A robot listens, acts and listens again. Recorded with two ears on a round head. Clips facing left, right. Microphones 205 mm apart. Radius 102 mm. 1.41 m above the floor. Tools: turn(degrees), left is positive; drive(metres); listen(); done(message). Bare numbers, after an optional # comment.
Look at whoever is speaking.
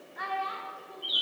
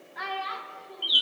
# The child speaking: about 65° right or 115° right.
turn(-65)
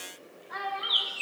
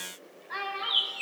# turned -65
# So it is at 40° right.
turn(-40)
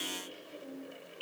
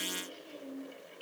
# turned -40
# The child speaking is now 25° right.
turn(-25)
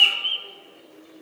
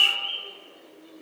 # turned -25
listen()
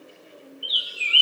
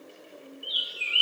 listen()
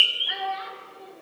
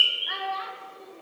done("Facing the child speaking.")